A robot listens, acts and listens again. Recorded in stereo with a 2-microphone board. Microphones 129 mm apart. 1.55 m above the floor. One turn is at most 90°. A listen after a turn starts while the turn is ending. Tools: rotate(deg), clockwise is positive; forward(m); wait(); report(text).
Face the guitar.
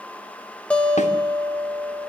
rotate(-30)
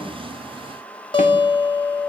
rotate(-90)
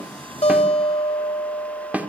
rotate(-50)
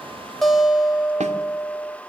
report("Facing the guitar.")